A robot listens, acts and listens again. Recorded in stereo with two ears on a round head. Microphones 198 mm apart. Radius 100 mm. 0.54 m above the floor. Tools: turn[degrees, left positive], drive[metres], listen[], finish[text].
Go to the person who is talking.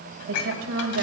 Thought: The woman speaking: about 65° right or 115° right.
Action: turn[-65]
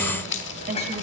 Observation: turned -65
Thought: So it is at 40° right.
Action: turn[-40]
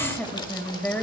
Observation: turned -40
Thought: The woman speaking is now 10° left.
Action: turn[10]
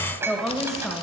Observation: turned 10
Action: drive[1.0]
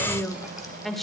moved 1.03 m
Action: drive[1.0]
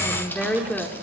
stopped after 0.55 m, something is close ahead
Action: finish[Arrived at the woman speaking, straight ahead.]